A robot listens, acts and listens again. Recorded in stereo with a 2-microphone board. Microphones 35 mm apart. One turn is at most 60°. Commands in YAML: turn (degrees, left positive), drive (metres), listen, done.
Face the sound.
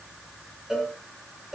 turn: -15
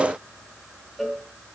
done: "Facing the cowbell, 2 to 4 m away."